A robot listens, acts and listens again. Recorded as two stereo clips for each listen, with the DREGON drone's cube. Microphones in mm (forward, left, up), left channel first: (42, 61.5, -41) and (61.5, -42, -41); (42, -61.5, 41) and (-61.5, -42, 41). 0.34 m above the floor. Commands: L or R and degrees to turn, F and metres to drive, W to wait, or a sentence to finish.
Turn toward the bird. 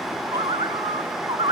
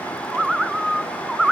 R105
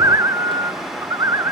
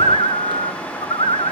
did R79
R25
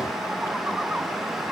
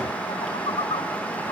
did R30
W
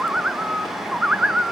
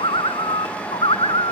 Found it: a bird, straight ahead.